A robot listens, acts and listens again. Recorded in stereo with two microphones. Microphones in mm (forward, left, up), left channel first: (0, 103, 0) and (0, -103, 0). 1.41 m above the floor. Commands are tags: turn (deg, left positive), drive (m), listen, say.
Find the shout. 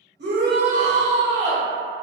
<turn deg="-50"/>
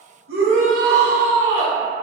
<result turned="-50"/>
<turn deg="-75"/>
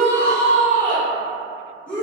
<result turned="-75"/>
<say>Facing the shout, 1 to 2 m away.</say>